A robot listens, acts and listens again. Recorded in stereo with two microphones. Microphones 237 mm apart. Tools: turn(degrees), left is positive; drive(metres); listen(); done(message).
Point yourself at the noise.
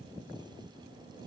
listen()
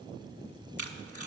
turn(degrees=90)
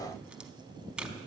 done("Facing the tape being pulled.")